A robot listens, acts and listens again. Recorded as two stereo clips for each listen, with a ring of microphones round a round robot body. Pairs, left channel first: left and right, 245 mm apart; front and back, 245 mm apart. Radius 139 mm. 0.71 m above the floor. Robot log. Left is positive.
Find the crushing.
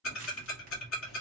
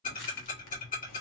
note: The crushing: 30° right.
cmd yaw -30
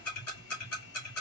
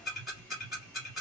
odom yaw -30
cmd idle
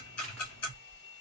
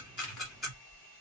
end: Found it: crushing, straight ahead.